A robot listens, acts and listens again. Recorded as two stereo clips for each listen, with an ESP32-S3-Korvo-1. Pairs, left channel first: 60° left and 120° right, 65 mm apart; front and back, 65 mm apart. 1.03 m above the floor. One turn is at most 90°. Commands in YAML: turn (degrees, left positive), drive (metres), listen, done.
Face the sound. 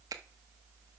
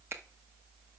turn: -90
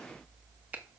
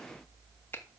turn: -55
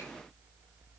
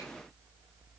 listen: true
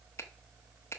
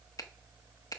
turn: 15
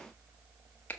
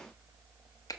done: "Facing the finger snap."